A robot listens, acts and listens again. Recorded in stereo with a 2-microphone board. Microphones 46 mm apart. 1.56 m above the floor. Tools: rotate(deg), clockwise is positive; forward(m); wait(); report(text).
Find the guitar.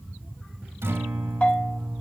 rotate(65)
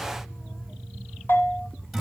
report("Facing the guitar.")